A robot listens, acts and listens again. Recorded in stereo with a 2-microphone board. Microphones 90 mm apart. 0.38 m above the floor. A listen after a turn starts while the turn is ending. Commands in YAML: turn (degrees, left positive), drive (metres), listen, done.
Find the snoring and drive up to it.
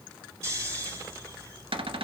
turn: -30
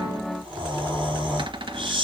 turn: -120
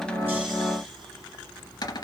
listen: true
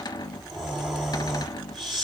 drive: 1.0
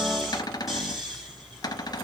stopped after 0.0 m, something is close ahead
done: "Something is in my way. I am facing the snoring but have not reached it."